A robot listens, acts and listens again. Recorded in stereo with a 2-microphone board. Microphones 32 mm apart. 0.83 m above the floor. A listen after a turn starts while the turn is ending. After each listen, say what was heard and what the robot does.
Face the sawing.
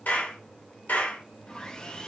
The sawing: about 25° left or 155° left. Turn 25° left.
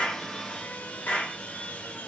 So it is at 130° left. Turn 130° left.
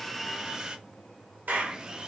The sawing is now 25° right. Turn 25° right.
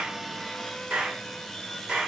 The sawing is now 10° left. Turn 10° left.
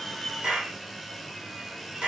Found it: sawing, straight ahead, under 1 m away.